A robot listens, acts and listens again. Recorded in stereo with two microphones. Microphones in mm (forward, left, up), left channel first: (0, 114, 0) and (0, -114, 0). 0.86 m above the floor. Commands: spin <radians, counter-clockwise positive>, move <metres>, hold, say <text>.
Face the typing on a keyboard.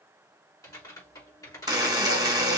spin 0.26
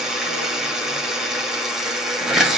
hold
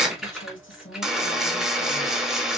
say Facing the typing on a keyboard, 2 to 4 m away.